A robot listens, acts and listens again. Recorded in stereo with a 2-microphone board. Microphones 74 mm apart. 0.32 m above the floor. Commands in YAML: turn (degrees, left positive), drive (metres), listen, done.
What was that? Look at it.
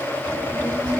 turn: -90
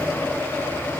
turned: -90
listen: true
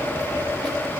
done: "Found it: a child speaking, straight ahead."